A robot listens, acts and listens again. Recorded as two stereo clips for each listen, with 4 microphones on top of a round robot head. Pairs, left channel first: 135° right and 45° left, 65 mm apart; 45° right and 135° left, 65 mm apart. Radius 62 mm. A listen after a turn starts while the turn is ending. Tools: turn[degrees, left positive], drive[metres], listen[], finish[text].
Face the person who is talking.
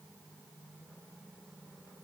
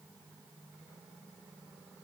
Action: listen[]
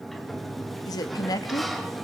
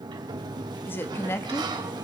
Thought: The woman speaking: 100° right.
Action: turn[-100]
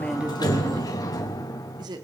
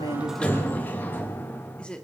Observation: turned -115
Thought: The woman speaking is now 30° left.
Action: turn[30]
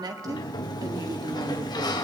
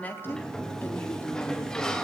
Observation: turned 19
Thought: Nothing new. It was at 10° left.
Action: turn[10]
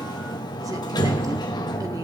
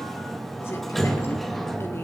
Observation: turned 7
Action: listen[]
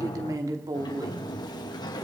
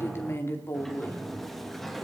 Thought: The woman speaking is now 10° left.
Action: turn[10]
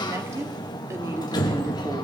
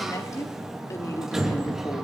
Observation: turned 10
Action: listen[]
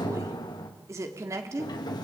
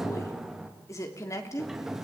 Action: finish[Facing the woman speaking, 2 to 4 m away.]